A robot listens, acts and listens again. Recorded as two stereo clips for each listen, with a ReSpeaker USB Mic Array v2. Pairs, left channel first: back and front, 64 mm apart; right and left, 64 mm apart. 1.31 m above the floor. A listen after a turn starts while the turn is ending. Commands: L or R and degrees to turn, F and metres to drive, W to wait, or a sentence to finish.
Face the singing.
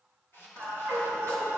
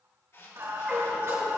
L130
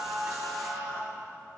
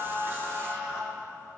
L20
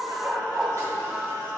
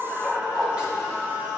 L25
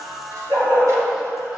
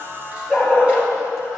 L20
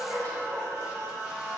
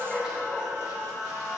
L15
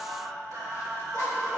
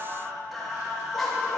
Found it: singing, straight ahead.